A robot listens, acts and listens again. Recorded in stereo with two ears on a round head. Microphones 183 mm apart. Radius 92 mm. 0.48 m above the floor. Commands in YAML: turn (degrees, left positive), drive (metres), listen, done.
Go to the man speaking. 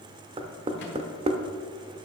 listen: true
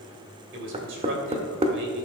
turn: -60
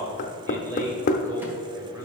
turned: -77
turn: -20
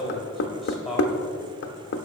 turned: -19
drive: 1.0
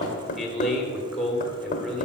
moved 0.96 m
drive: 1.0
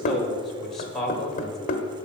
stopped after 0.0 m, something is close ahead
done: "Arrived at the man speaking, straight ahead."